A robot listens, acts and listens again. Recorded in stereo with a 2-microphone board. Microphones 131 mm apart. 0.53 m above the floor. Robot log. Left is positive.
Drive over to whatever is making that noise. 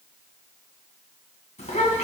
note: The child speaking: about 60° left or 120° left.
cmd yaw +60
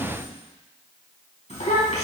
note: So it is at 60° left.
cmd yaw +60
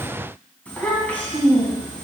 note: The child speaking is now 10° left.
cmd yaw +10
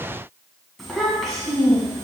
cmd fwd 1.0
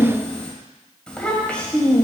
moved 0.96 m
note: The child speaking is now 10° left.
cmd yaw +10
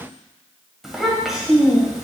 cmd fwd 1.0
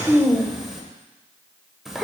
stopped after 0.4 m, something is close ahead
end: I am next to the child speaking.